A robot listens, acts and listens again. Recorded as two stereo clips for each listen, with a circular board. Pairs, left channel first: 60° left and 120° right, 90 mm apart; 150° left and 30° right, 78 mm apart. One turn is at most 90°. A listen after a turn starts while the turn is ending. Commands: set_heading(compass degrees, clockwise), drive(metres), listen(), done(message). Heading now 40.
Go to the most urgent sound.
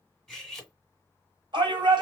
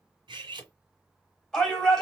set_heading(130)
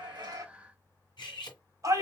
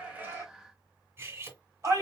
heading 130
set_heading(205)
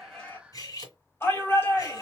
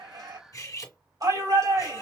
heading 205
drive(1.0)
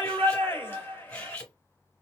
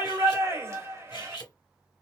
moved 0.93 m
drive(1.0)
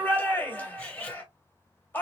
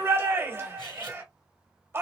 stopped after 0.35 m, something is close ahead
done("Arrived at the shout, straight ahead.")